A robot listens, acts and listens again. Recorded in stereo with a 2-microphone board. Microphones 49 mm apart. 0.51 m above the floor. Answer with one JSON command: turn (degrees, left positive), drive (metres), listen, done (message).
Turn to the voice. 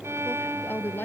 {"turn": 45}
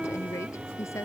{"turn": 85}
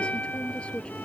{"turn": 25}
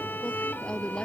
{"turn": 20}
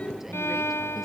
{"listen": true}
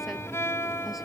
{"listen": true}
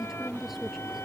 {"done": "Facing the woman speaking."}